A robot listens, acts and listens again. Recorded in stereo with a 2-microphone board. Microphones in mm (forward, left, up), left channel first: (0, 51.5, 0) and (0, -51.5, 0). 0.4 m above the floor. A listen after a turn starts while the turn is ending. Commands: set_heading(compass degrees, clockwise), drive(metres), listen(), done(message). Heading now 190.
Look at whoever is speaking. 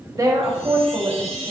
set_heading(225)
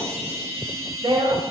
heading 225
set_heading(330)
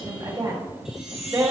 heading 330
set_heading(10)
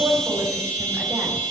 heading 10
listen()
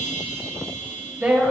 set_heading(25)
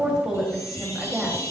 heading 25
done("Found it: a woman speaking, straight ahead.")